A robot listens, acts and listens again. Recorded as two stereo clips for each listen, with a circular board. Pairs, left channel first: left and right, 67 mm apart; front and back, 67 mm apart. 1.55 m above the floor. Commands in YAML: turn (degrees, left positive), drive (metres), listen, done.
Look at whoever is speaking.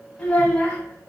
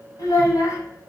turn: 15
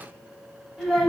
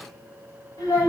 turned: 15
done: "Facing the child speaking."